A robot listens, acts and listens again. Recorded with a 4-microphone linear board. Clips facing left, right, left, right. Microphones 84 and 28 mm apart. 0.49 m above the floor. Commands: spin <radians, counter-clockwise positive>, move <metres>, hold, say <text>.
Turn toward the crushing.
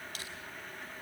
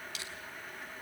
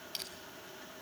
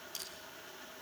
spin 0.79
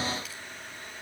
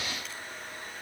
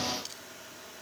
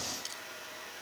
hold
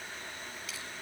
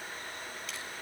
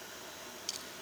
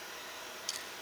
hold
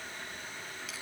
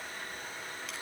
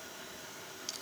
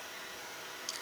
say I heard crushing, but can't make it out now. It was about straight ahead or 90° left.